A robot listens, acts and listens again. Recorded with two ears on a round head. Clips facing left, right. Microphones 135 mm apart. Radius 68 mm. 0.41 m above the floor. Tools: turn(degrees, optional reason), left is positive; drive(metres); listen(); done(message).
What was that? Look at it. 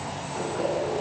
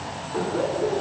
turn(degrees=-50, reason="The laughter: about 50° right or 130° right.")
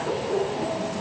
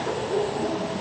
done("Found it: laughter, straight ahead.")